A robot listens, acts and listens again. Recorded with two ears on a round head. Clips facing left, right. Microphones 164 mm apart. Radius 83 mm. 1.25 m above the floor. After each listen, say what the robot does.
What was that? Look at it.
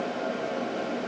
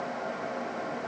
Keep listening.
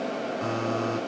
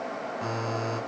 Turn 30° left.
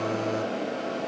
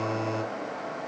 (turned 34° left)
Facing the buzzer, over 4 m away.